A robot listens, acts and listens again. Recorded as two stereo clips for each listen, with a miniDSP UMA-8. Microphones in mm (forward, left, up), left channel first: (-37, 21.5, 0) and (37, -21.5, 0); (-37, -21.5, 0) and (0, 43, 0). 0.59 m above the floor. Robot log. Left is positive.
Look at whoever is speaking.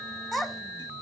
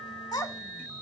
note: The child speaking: 120° right.
cmd yaw -120
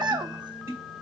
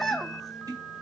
note: The child speaking is now 35° right.
cmd yaw -35
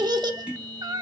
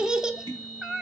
note: The child speaking is now 15° right.
cmd yaw -15
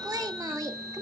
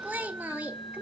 end: Found it: a child speaking, straight ahead.